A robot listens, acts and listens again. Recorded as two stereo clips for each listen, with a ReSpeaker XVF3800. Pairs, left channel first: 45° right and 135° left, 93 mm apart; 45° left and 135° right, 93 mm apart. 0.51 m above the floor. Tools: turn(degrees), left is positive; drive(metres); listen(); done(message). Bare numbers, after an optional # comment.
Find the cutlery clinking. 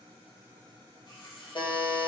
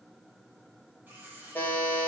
# The cutlery clinking: 65° right.
turn(-65)
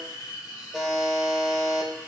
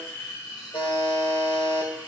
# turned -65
done("Found it: cutlery clinking, straight ahead, 2 to 4 m away.")